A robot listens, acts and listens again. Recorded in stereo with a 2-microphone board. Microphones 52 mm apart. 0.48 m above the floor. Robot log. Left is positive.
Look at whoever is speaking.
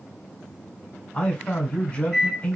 note: The man speaking: about 25° left or 155° left.
cmd yaw +25
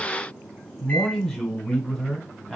end: Found it: a man speaking, straight ahead.